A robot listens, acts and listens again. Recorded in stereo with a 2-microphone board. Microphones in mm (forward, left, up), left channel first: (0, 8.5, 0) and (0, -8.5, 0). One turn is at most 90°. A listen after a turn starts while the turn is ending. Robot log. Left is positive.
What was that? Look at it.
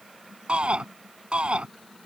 note: The shout: about 65° right or 115° right.
cmd yaw -65
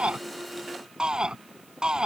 note: So it is at 50° right.
cmd yaw -50
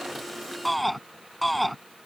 end: Facing the shout.